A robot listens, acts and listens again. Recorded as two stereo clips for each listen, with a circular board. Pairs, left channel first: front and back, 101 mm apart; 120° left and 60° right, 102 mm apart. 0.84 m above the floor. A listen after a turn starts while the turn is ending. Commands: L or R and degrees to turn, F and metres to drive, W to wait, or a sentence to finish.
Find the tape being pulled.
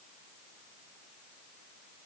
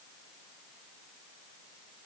W
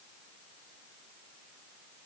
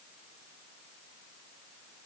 W
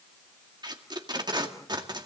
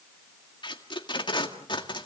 L145
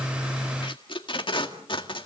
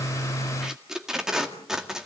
L25
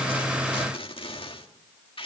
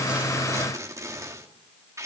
Found it: tape being pulled, straight ahead, 2 to 4 m away.